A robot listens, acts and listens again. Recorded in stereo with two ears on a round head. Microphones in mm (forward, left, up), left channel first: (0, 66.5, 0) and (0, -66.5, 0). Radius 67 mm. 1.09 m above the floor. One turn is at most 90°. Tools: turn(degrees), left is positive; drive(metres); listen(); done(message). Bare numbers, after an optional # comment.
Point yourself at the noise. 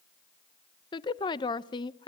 # The woman speaking: about 30° left or 150° left.
turn(30)
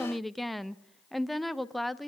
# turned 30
done("Facing the woman speaking.")